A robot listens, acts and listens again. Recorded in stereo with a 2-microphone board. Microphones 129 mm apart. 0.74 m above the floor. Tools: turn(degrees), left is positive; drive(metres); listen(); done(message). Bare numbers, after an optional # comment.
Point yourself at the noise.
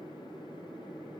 listen()
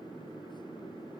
listen()
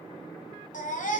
turn(90)
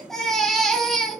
done("Found it: a baby crying, straight ahead, 1 to 2 m away.")